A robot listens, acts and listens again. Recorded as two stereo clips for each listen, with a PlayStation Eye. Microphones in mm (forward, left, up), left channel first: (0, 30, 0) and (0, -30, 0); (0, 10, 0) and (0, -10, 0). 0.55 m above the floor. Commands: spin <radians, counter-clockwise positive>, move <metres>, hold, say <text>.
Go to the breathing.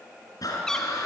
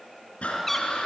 spin 1.57
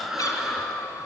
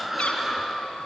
move 1.0
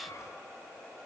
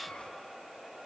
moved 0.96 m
hold
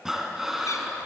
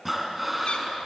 move 1.0
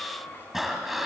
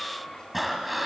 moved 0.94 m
move 1.0
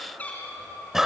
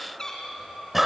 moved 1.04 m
move 1.0
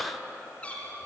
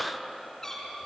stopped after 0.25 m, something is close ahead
say I am next to the breathing.